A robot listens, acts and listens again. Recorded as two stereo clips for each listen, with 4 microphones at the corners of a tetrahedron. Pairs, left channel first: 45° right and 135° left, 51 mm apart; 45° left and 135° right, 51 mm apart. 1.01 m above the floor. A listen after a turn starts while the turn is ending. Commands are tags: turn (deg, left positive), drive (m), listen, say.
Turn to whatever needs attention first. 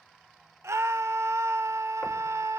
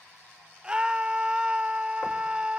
<turn deg="155"/>
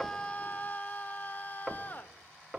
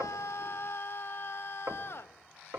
<turn deg="10"/>
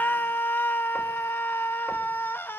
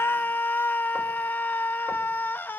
<say>Facing the scream.</say>